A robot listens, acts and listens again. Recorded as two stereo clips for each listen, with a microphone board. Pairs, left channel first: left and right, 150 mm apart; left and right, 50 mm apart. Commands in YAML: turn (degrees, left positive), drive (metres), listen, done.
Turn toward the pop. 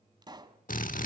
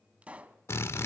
turn: -30
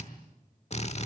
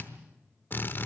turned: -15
listen: true
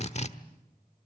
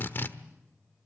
done: "I heard a pop, but can't make it out now. It was about 15° right or 135° right."